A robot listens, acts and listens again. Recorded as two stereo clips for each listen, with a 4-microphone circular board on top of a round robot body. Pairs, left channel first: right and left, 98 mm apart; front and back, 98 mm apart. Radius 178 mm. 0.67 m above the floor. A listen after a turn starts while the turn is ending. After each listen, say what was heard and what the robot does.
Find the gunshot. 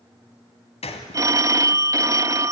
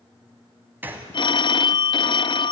The gunshot: 110° right. Turn 110° right.
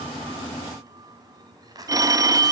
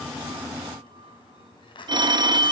Facing where the gunshot came from. I can't hear it now.